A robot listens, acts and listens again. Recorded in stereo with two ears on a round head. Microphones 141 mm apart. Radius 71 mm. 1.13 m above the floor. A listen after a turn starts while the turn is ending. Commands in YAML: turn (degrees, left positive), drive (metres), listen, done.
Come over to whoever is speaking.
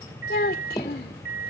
turn: 60
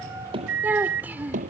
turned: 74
turn: -10
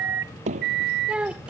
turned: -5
drive: 1.0
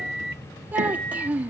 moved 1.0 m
turn: -10
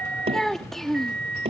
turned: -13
drive: 1.0
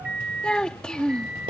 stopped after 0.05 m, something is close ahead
done: "I am next to the child speaking."